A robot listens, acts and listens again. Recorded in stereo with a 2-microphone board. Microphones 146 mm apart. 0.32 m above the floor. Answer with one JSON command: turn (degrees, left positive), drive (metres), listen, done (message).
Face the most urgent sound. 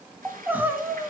{"turn": -30}
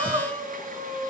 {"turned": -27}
{"turn": -140}
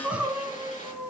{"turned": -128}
{"turn": -10}
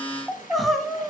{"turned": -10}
{"done": "Found it: crying, straight ahead."}